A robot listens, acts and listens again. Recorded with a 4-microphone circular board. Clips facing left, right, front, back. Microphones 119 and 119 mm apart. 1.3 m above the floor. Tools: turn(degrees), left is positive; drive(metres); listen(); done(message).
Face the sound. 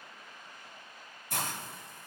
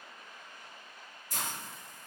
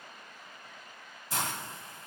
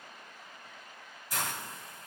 turn(degrees=60)
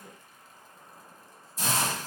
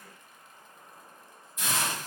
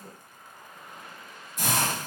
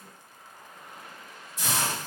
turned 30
turn(degrees=35)
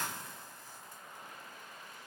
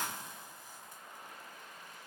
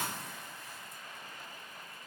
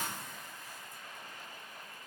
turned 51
turn(degrees=-20)
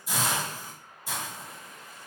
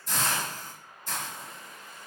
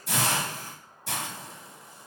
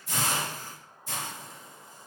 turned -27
turn(degrees=10)
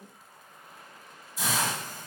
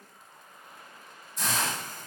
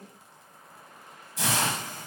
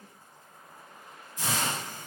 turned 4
done("Found it: a hiss, straight ahead, under 1 m away.")